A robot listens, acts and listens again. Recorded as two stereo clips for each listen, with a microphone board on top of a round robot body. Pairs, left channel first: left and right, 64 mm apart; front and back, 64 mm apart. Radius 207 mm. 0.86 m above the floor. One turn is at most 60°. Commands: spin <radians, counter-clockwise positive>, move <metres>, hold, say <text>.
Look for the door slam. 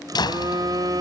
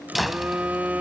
spin 1.05
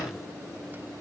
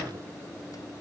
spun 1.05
spin 0.52
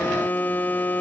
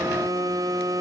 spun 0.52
say I heard a door slam from this way, but can't make it out now.